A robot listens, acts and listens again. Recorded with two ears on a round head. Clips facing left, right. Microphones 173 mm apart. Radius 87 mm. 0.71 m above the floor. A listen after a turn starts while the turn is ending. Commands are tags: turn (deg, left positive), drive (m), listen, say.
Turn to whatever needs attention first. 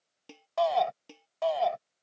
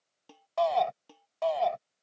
<turn deg="30"/>
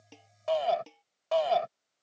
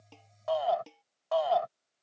<turn deg="150"/>
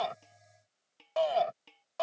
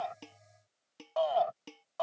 <turn deg="30"/>
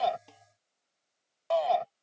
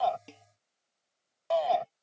<say>Facing the shout.</say>